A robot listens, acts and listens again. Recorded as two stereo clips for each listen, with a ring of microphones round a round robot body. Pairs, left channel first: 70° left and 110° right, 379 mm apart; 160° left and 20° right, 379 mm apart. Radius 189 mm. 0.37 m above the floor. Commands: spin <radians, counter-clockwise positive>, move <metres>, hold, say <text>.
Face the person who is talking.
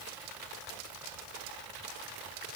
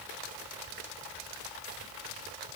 hold
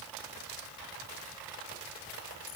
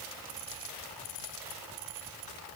hold
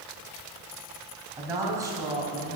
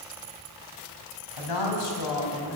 spin 2.88
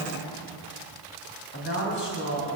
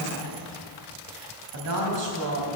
spin 0.17
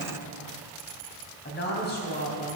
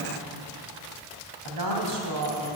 say Facing the woman speaking.